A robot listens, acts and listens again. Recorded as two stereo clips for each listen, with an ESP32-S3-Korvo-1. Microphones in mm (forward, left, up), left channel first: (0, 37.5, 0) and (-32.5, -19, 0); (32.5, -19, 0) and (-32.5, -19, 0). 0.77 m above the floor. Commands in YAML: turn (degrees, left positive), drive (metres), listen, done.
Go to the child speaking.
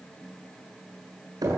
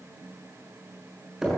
listen: true
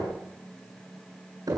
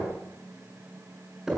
listen: true
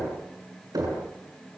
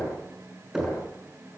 done: "I can't make out a child speaking, only knocking."